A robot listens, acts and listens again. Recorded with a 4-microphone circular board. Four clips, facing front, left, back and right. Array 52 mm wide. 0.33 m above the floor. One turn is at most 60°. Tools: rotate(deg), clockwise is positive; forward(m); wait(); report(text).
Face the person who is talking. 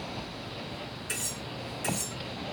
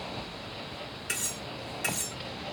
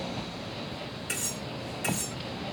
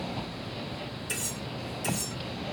wait()
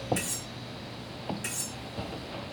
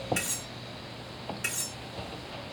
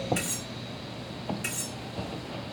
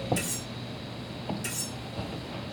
wait()
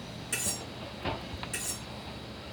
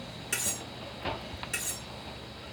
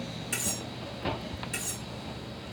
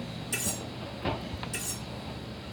report("I can't make out anyone speaking, only cutlery clinking.")